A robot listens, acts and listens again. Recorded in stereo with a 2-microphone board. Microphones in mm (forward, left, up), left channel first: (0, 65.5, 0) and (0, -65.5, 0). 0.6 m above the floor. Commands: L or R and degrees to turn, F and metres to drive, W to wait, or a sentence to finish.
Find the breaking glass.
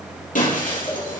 L75
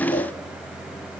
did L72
W
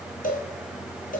I heard breaking glass, but can't make it out now. It was about straight ahead or 35° left.